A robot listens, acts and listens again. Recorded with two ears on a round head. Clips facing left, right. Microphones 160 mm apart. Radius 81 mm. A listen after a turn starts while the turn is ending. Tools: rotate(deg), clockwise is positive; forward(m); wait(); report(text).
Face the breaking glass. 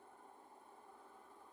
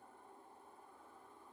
wait()
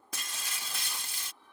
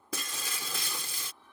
rotate(65)
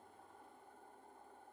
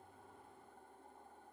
wait()
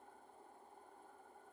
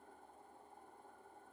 report("I heard breaking glass, but can't make it out now. It was about straight ahead or 50° right.")